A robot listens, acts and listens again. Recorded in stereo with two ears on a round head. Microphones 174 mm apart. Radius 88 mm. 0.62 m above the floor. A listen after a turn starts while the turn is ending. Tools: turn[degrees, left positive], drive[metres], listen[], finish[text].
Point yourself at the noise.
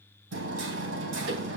Thought: The hammering: about 65° right or 115° right.
Action: turn[-65]
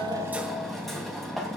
Action: finish[Facing the hammering.]